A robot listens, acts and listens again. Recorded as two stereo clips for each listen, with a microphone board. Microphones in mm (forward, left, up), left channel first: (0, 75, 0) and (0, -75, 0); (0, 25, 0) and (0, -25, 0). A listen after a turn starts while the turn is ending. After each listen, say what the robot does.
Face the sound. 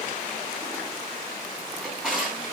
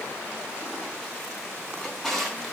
Turn 30° left.
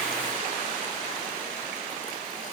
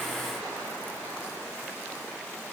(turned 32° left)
Keep listening.
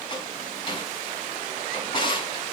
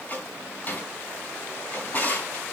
Turn 150° left.
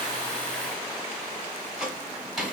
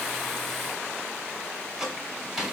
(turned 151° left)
Found it: a drawer, straight ahead, over 4 m away.